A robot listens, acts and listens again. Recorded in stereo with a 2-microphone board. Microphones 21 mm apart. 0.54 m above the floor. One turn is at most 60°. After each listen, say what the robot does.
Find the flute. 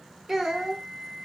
Turn 35° left.
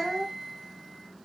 Turn 60° left.
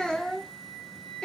Turn 60° left.
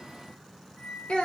Turn 20° left.
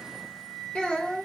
Found it: a flute, straight ahead.